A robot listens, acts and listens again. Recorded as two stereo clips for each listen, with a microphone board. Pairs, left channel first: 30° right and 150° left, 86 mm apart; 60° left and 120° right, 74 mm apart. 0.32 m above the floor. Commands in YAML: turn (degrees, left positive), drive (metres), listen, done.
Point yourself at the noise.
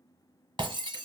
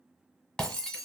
turn: 140
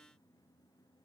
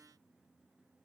done: "I heard breaking glass from this way, but can't make it out now."